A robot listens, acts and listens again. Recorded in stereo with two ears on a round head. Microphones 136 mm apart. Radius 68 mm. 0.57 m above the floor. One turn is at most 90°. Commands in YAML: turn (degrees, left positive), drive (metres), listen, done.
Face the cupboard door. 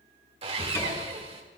turn: 20
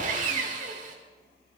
listen: true
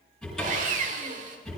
done: "Facing the cupboard door, over 4 m away."